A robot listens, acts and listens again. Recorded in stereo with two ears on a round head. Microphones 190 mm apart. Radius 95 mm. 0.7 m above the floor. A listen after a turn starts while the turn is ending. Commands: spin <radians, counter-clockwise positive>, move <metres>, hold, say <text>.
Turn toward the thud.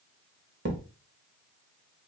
spin -0.96
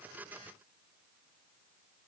hold
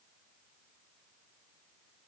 say I heard a thud, but can't make it out now. It was about straight ahead or 70° right.